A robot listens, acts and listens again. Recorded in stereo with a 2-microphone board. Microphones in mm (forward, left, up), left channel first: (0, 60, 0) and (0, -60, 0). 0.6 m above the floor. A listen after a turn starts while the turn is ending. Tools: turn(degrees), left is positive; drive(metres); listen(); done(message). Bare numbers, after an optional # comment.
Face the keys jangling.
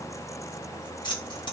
# The keys jangling: about 40° left or 140° left.
turn(40)
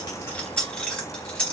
# So it is at 10° left.
turn(10)
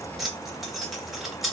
done("Facing the keys jangling, 1 to 2 m away.")